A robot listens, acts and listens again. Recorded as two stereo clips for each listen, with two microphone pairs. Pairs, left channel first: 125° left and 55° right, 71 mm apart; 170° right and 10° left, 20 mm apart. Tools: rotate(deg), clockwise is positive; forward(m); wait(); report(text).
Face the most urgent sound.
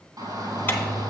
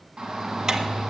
rotate(35)
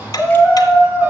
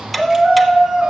report("Found it: a shout, straight ahead, 2 to 4 m away.")